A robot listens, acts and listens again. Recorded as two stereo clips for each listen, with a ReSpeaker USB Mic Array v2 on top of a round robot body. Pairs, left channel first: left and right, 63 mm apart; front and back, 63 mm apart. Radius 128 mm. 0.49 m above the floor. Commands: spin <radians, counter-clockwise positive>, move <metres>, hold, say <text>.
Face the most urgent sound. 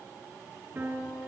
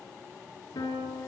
hold
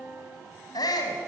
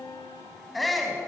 spin 1.57
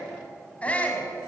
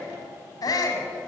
spin 0.35
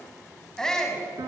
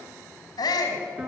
spin 0.17
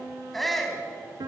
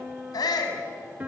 say Facing the shout, over 4 m away.